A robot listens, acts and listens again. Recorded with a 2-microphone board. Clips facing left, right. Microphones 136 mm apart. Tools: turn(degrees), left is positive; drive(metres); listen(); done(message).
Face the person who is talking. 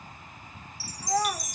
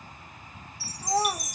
turn(degrees=-25)
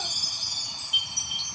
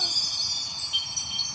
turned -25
listen()
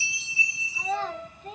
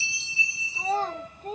turn(degrees=-130)
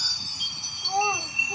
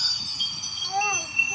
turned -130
turn(degrees=35)
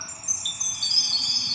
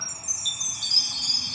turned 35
listen()
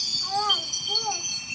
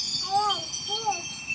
turn(degrees=-10)
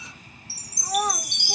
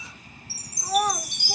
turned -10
done("Facing the child speaking, 1 to 2 m away.")